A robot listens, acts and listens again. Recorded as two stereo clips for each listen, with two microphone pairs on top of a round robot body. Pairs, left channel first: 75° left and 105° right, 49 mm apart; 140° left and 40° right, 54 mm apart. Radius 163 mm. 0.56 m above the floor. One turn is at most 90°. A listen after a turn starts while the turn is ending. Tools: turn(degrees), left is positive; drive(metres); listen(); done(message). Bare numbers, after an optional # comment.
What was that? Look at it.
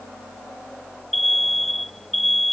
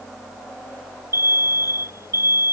done("Found it: an alarm, straight ahead.")